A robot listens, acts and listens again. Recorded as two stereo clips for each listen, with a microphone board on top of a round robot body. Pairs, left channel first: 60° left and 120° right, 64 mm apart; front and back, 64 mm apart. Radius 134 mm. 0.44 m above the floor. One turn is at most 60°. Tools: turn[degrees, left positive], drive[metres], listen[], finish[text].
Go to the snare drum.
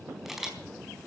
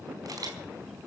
Action: listen[]
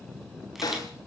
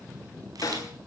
Thought: The snare drum: 35° left.
Action: turn[35]
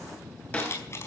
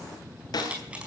Thought: The snare drum is now 10° right.
Action: turn[-10]
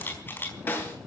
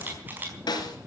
Action: drive[1.0]
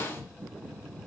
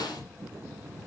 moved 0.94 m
Action: drive[1.0]
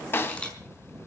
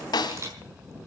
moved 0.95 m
Action: drive[1.0]
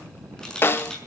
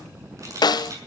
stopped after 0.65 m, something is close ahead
Action: finish[Arrived at the snare drum, straight ahead.]